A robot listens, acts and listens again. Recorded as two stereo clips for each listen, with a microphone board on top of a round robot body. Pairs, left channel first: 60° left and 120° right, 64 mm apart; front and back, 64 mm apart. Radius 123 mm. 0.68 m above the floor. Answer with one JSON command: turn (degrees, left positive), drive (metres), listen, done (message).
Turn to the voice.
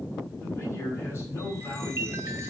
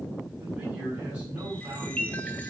{"turn": 115}
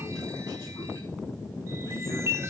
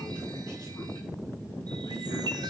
{"listen": true}
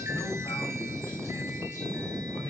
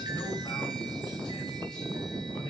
{"listen": true}
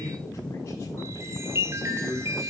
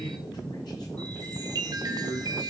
{"turn": 15}
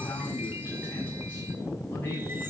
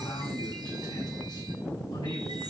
{"done": "Facing the man speaking."}